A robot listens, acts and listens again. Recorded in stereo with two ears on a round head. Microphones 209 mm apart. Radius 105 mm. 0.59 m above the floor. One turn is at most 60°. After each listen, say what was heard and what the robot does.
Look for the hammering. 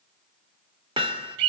The hammering: about 20° right or 160° right. Turn 20° right.
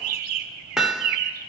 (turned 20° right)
Found it: hammering, straight ahead.